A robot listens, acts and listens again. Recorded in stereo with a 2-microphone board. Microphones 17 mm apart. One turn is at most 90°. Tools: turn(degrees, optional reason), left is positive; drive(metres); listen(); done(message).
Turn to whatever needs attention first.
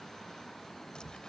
listen()
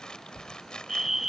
turn(degrees=-15, reason="The fire alarm: about 15° right or 165° right.")
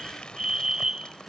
turn(degrees=-90, reason="So it is at 150° right.")
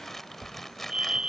turn(degrees=-40, reason="The fire alarm is now 40° right.")
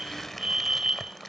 turn(degrees=-35, reason="The fire alarm is now 35° right.")
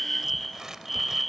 done("Found it: a fire alarm, straight ahead.")